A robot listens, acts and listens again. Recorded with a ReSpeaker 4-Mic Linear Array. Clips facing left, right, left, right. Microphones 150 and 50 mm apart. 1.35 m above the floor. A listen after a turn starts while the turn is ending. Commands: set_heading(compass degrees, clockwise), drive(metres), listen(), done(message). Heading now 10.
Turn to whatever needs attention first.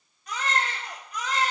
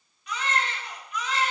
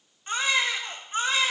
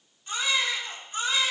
set_heading(330)
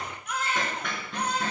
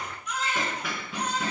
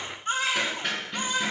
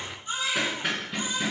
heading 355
set_heading(230)
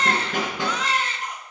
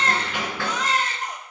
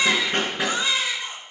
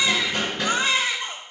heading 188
set_heading(233)
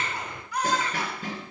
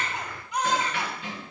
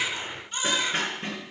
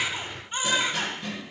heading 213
set_heading(233)
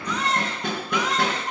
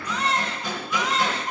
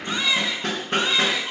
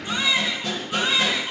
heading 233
done("Found it: a baby crying, straight ahead, 2 to 4 m away.")